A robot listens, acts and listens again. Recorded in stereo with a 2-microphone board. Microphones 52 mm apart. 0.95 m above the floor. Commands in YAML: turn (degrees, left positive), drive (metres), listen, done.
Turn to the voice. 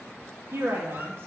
turn: -50
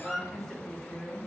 turn: 10
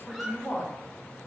turn: 10
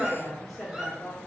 turn: 10
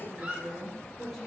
done: "Found it: a woman speaking, straight ahead, 2 to 4 m away."